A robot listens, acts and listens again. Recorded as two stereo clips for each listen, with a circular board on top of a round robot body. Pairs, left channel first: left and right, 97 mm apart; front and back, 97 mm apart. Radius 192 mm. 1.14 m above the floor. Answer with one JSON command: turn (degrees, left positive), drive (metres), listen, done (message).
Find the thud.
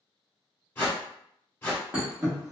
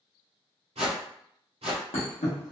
{"turn": -10}
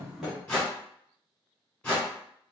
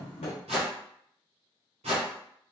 {"done": "Found it: a thud, straight ahead, 1 to 2 m away."}